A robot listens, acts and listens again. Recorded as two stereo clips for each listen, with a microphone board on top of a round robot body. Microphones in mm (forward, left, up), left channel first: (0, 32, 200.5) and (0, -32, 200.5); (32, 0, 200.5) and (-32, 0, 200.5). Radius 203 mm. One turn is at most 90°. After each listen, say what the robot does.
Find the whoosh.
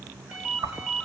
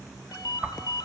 Turn 90° right.
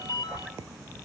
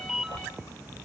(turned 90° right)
Turn 30° right.
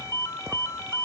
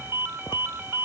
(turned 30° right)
Keep listening.
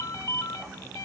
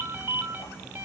Keep listening.
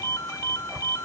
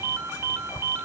Facing the whoosh.